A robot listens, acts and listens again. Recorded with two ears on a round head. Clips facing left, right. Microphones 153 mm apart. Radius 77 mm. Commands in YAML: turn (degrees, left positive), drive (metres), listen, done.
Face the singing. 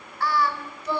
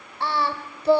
turn: -30
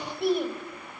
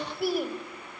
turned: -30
done: "Facing the singing."